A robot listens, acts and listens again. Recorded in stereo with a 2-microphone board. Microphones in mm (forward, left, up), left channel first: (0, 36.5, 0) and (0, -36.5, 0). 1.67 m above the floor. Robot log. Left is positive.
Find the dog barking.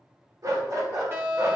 note: The dog barking: about 45° right or 135° right.
cmd yaw -45
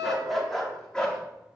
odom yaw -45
note: So it is at 10° left.
cmd yaw +10
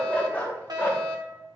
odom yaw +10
note: The dog barking is now 30° left.
cmd yaw +30
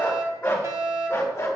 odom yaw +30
note: The dog barking is now 40° left.
cmd yaw +40
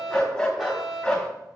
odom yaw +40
note: The dog barking is now 10° left.
cmd yaw +10
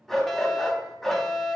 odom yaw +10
end: Found it: a dog barking, straight ahead.